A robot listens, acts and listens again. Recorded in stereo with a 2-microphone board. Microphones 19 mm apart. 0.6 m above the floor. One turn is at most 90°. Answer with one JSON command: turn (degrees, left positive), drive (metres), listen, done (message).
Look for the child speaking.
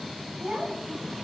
{"turn": -55}
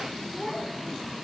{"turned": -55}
{"done": "Facing the child speaking."}